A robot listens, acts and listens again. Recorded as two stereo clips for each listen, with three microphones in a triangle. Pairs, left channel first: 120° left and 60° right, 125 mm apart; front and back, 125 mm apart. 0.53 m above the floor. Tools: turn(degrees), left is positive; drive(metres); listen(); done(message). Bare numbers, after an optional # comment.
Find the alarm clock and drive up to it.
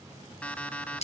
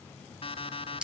# The alarm clock: 40° left.
turn(40)
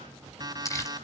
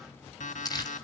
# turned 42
drive(1.0)
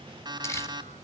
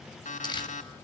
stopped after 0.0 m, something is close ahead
done("Blocked. The alarm clock is further on, straight ahead.")